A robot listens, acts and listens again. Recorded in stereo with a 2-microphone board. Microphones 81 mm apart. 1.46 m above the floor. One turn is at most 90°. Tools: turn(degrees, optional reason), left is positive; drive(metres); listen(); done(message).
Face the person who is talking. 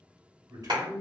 turn(degrees=-45, reason="The man speaking: about 45° right or 135° right.")
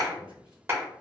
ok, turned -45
listen()
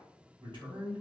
turn(degrees=-90, reason="So it is at 90° right.")
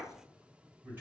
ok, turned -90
turn(degrees=-25, reason="The man speaking is now 25° right.")
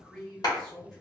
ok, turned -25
done("Found it: a man speaking, straight ahead, 1 to 2 m away.")